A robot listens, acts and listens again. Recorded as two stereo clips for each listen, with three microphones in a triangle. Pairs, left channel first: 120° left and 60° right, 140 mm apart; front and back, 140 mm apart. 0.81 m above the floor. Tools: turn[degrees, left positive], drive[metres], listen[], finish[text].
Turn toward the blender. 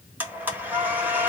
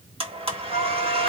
Thought: The blender: 135° right.
Action: turn[-135]
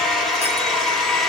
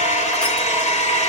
Thought: The blender is now 30° left.
Action: turn[30]
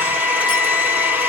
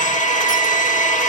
Thought: The blender is now 15° left.
Action: turn[15]
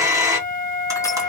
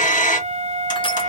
Action: finish[Found it: a blender, straight ahead.]